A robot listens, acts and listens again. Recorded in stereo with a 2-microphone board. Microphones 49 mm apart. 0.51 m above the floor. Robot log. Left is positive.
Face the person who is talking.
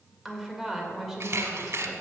cmd yaw -30
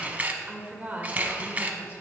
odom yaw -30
note: So it is at 145° right.
cmd yaw -145
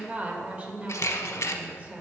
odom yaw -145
note: The woman speaking is now 40° right.
cmd yaw -40
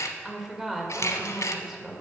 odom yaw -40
note: The woman speaking is now 15° right.
cmd yaw -15
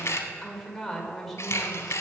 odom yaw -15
end: Facing the woman speaking, 1 to 2 m away.